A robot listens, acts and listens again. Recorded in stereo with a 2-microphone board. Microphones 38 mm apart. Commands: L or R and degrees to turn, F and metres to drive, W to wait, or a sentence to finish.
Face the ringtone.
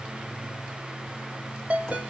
R35
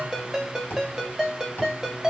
R10
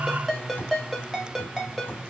Facing the ringtone.